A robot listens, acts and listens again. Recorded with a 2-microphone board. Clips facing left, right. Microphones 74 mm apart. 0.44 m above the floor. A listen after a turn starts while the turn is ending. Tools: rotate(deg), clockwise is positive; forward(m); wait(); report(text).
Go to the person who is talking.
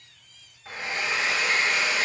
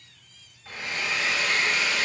wait()
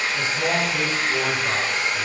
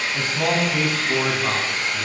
rotate(55)
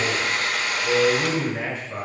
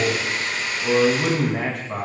rotate(70)
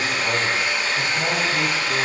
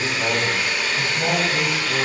forward(1.0)
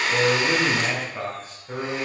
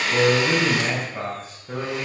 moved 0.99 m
forward(1.0)
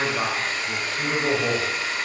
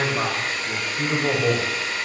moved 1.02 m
forward(1.0)
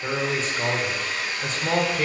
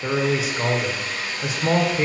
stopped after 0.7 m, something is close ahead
rotate(10)
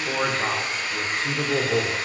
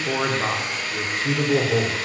report("I am next to the man speaking.")